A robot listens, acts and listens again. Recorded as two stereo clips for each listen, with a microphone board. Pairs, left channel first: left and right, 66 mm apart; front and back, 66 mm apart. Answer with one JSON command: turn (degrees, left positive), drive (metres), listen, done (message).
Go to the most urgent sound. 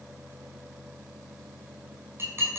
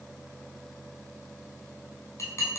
{"listen": true}
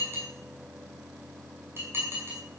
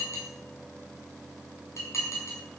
{"listen": true}
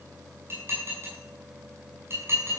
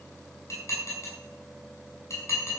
{"done": "I can't make out anything urgent to turn to."}